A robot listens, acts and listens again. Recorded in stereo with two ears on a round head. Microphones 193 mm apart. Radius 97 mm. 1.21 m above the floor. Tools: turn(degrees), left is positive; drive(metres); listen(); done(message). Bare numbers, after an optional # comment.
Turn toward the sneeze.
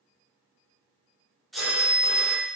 turn(30)
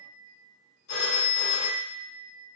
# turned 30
listen()
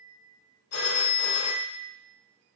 done("I heard a sneeze, but can't make it out now. It was about 30° right or 150° left.")